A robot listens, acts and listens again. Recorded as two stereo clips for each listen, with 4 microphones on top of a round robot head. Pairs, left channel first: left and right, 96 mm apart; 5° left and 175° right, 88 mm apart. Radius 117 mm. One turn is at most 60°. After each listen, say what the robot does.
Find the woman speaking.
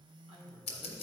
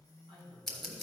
Turn 60° right.
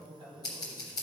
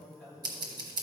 Turn 60° right.
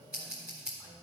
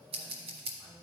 Turn 15° right.
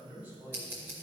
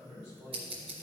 Turn 20° right.
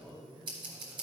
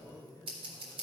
Found it: a woman speaking, straight ahead, over 4 m away.